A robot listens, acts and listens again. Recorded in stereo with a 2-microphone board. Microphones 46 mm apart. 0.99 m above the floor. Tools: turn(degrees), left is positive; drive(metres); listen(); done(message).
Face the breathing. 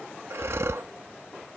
turn(degrees=-65)
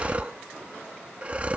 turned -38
turn(degrees=-30)
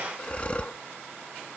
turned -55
turn(degrees=25)
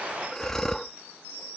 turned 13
turn(degrees=10)
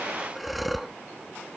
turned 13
done("Facing the breathing.")